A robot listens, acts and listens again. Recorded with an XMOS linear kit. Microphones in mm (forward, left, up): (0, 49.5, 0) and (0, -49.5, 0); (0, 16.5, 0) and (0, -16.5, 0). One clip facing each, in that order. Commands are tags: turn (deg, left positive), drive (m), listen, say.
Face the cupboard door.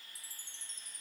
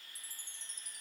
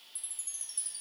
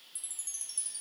<listen/>
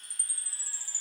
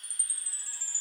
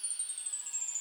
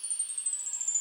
<listen/>
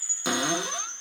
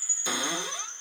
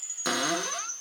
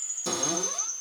<turn deg="90"/>
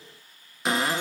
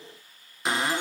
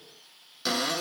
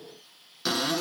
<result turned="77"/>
<say>Found it: a cupboard door, straight ahead, 1 to 2 m away.</say>